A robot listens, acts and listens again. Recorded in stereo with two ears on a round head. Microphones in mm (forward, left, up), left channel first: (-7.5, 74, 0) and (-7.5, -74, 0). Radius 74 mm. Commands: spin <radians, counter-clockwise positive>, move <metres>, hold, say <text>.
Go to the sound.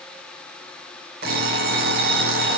spin -1.13
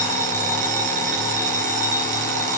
spin -0.87
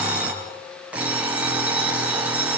move 1.0
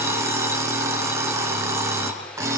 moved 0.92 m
spin -0.26
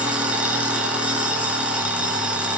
move 1.0
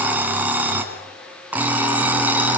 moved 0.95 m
spin -0.17
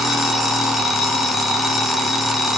move 1.0
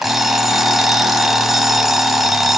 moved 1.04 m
move 1.0
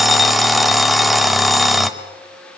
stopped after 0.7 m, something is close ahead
say Arrived at the alarm clock, straight ahead.